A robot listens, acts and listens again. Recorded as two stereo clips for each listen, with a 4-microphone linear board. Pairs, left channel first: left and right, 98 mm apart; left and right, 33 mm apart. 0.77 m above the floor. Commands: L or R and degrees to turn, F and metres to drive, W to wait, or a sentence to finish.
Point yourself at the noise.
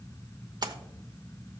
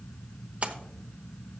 R40
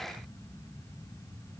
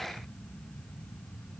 W
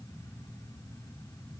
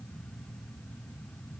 I heard a splash, but can't make it out now. It was about straight ahead or 100° right.